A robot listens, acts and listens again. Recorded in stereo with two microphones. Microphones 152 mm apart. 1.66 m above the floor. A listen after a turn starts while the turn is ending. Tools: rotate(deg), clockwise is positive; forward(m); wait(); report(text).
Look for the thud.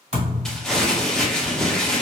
rotate(50)
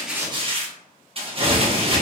wait()
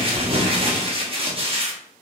report("I heard a thud, but can't make it out now. It was about straight ahead or 80° right.")